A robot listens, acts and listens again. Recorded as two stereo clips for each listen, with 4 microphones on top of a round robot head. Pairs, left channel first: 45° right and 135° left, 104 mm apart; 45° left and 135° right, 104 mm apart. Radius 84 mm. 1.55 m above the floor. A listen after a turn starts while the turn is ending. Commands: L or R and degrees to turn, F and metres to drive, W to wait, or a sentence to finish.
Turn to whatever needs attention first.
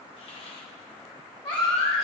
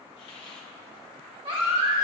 R95
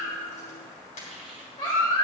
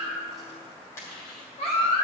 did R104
L10
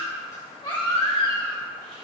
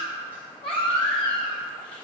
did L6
Facing the baby crying, 2 to 4 m away.